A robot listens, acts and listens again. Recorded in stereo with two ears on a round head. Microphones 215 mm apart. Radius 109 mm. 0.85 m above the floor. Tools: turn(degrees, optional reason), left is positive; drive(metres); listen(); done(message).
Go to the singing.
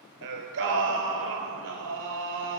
turn(degrees=-55, reason="The singing: about 55° right or 125° right.")
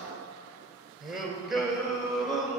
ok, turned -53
drive(metres=1.0)
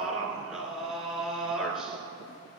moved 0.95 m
drive(metres=1.0)
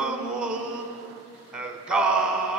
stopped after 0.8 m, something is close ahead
done("Arrived at the singing, straight ahead.")